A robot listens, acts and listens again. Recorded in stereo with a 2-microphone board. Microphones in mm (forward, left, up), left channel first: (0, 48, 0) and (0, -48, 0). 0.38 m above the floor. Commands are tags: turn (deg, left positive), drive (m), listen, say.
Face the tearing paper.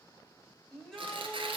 <turn deg="-70"/>
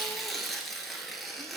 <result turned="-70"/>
<say>Facing the tearing paper.</say>